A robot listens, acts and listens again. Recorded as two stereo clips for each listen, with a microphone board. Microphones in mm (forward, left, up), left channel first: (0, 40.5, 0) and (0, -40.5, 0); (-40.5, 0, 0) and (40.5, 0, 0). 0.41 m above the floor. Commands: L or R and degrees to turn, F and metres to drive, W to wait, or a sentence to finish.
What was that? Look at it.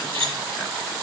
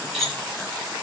R95
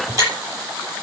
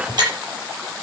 R35
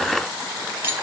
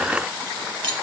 R25
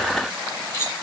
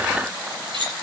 L30
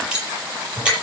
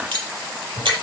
R10
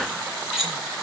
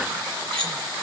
Found it: cutlery clinking, straight ahead, over 4 m away.